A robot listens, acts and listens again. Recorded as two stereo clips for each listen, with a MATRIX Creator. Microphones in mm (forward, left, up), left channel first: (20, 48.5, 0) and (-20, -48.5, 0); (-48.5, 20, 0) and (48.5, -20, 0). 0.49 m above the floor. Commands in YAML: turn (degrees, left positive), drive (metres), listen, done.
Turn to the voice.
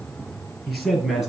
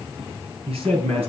turn: -25
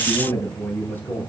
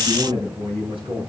done: "Facing the man speaking."